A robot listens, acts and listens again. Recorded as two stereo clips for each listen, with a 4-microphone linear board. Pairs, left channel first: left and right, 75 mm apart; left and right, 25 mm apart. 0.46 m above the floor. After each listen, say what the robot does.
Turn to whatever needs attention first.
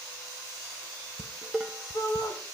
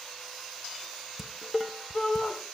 Turn 50° left.
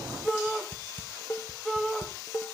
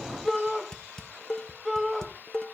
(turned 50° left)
Facing the shout, 2 to 4 m away.